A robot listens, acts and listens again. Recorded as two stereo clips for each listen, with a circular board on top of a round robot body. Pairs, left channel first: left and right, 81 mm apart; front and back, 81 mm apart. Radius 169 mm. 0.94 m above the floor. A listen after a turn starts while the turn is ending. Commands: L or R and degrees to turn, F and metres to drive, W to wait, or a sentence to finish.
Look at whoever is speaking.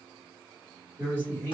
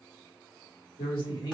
L25
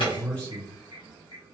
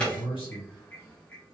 L15
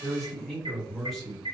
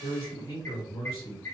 Facing the man speaking.